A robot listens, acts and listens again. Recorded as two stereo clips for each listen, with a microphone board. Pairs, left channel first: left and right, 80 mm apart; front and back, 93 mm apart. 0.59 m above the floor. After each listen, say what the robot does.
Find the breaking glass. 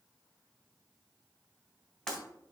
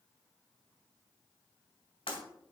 Turn 10° left.
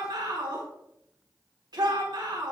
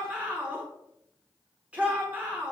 I heard breaking glass from this way, but can't make it out now.